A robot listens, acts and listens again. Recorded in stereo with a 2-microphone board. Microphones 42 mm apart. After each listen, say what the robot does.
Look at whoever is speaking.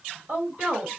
Turn 35° right.
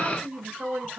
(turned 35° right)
Turn 105° right.
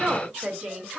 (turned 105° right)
Turn 15° right.
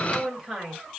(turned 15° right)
Found it: a woman speaking, straight ahead, 2 to 4 m away.